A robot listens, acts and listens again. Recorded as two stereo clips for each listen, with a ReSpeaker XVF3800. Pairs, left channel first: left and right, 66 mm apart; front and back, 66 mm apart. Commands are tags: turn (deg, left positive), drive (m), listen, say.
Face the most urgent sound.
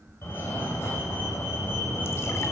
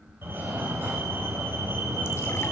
<turn deg="135"/>
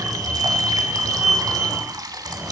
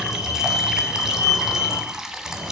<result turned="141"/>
<turn deg="-10"/>
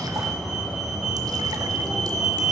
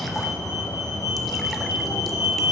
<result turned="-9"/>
<say>Facing the fire alarm, 2 to 4 m away.</say>